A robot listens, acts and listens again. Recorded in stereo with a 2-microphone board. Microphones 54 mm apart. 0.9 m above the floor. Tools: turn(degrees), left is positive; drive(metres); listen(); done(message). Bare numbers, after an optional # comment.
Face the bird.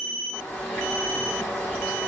# The bird: about 20° left or 160° left.
turn(20)
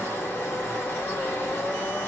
# So it is at 140° left.
turn(140)
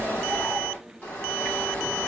# The bird is now 30° left.
turn(30)
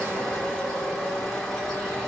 # The bird is now 10° left.
turn(10)
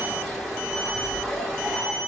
done("Found it: a bird, straight ahead.")